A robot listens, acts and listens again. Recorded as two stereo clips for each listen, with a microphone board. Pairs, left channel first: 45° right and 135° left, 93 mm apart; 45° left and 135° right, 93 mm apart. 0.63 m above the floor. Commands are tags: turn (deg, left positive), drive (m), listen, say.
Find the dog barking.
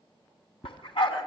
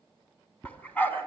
<turn deg="-25"/>
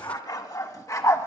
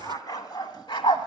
<turn deg="15"/>
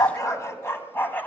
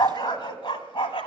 <turn deg="25"/>
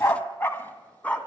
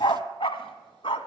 <turn deg="30"/>
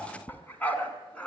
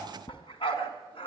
<turn deg="35"/>
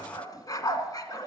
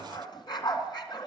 <say>Found it: a dog barking, straight ahead, 2 to 4 m away.</say>